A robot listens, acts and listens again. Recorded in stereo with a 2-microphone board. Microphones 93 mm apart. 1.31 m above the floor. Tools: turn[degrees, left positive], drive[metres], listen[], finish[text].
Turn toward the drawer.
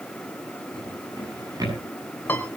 Thought: The drawer: about 40° right or 140° right.
Action: turn[-40]
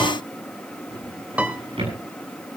Thought: So it is at 100° right.
Action: turn[-100]
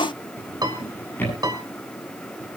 Thought: The drawer is now 20° left.
Action: turn[20]
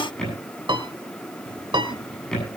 Action: finish[Found it: a drawer, straight ahead.]